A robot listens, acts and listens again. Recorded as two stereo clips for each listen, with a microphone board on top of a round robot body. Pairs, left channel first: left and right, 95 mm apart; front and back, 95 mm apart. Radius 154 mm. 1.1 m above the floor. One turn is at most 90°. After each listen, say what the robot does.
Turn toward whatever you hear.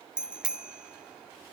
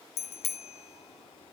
Turn 10° right.
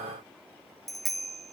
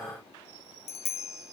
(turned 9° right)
Facing the bicycle bell.